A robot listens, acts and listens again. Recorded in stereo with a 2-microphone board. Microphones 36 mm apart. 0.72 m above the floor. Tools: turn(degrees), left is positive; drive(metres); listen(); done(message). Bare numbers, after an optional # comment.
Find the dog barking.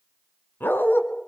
turn(90)
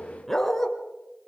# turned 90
# So it is at 10° left.
turn(10)
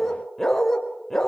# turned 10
done("Facing the dog barking.")